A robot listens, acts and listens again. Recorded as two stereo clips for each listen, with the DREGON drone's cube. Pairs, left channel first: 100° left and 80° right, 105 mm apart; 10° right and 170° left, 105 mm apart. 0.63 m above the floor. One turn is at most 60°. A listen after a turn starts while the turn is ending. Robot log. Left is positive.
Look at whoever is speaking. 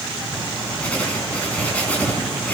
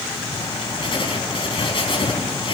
cmd idle
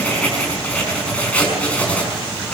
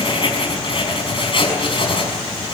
cmd idle
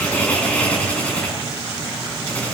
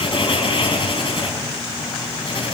end: I can't make out anyone speaking, only writing.